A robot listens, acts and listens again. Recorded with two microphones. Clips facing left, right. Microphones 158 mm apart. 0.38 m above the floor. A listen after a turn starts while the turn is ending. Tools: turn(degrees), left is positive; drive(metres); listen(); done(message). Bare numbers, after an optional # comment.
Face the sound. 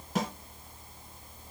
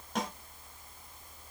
turn(30)
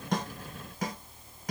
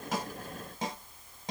# So it is at 30° right.
turn(-30)
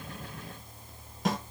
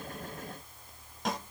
done("Found it: a snare drum, straight ahead.")